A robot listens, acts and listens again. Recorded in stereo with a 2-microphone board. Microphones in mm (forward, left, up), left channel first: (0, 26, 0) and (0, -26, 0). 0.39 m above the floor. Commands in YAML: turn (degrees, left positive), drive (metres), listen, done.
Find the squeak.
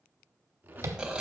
turn: -35
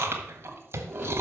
listen: true
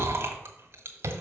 listen: true
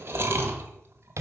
done: "I heard a squeak, but can't make it out now. It was about straight ahead or 110° right."